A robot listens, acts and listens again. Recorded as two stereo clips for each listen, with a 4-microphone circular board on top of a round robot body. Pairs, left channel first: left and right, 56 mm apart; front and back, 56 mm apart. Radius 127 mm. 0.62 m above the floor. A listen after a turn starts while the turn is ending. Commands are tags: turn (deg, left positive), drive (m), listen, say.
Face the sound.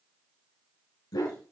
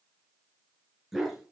<turn deg="95"/>
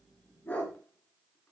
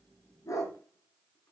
<turn deg="25"/>
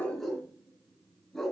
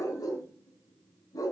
<say>Found it: a dog barking, straight ahead.</say>